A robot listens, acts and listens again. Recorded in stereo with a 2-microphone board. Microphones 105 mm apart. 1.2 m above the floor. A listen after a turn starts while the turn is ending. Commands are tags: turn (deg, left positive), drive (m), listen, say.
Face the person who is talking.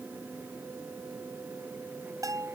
<listen/>
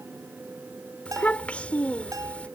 <turn deg="30"/>
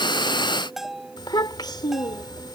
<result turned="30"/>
<turn deg="135"/>
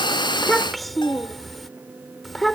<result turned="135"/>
<say>Facing the child speaking.</say>